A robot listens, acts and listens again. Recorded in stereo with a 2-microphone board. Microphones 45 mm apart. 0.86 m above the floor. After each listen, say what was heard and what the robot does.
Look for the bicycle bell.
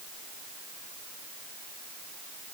Keep listening.
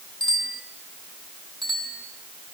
Turn 30° left.
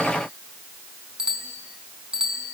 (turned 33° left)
So it is at 20° right. Turn 20° right.
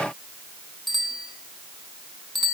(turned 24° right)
Found it: a bicycle bell, straight ahead, over 4 m away.